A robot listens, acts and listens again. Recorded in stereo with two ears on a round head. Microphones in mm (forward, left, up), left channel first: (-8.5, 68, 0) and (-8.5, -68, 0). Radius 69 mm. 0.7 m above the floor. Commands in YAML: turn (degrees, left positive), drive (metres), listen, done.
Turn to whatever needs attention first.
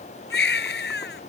turn: 90
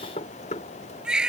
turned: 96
done: "Found it: a baby crying, straight ahead."